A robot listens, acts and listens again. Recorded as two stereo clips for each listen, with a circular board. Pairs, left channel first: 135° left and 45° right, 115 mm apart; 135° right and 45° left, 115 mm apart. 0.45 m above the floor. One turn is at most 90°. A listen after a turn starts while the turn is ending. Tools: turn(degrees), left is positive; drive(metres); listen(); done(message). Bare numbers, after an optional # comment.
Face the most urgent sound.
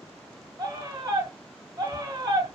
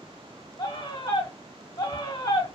# The scream: 90° right.
turn(-90)
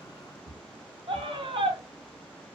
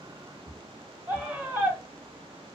# The scream is now 25° right.
turn(-25)
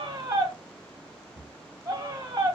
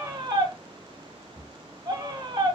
done("Facing the scream, 1 to 2 m away.")